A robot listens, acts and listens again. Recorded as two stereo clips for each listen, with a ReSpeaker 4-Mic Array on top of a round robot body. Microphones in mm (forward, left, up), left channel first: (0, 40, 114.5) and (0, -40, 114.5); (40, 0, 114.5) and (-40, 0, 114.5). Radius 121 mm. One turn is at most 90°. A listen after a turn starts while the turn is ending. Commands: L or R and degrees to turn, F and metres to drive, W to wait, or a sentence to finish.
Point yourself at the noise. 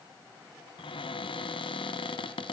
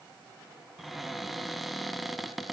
L90
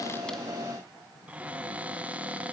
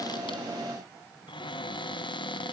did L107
R15
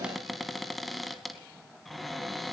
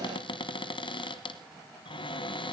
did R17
Facing the cupboard door, 1 to 2 m away.